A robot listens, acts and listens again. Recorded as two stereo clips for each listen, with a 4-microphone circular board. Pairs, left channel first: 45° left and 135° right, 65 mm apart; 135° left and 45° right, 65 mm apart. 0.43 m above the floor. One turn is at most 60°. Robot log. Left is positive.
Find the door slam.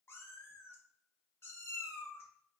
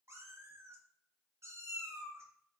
cmd idle
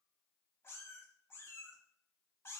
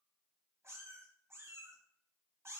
cmd idle
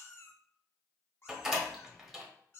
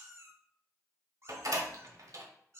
note: The door slam: 50° right.
cmd yaw -50
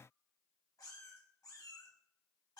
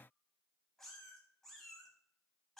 end: Facing where the door slam came from. I can't hear it now.